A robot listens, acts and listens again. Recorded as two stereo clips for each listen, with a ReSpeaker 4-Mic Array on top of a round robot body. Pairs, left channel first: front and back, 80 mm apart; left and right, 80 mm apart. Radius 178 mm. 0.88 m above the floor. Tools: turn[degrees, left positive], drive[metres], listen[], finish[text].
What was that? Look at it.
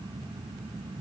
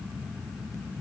Action: listen[]
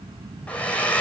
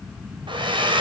Thought: The hair dryer: 75° right.
Action: turn[-75]
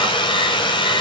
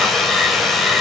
Action: finish[Found it: a hair dryer, straight ahead, 2 to 4 m away.]